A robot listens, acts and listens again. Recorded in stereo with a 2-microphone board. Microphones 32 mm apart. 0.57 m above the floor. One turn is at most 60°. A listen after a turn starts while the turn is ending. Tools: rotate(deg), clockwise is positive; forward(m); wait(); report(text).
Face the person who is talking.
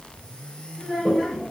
rotate(-20)
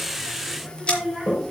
report("Found it: a child speaking, straight ahead.")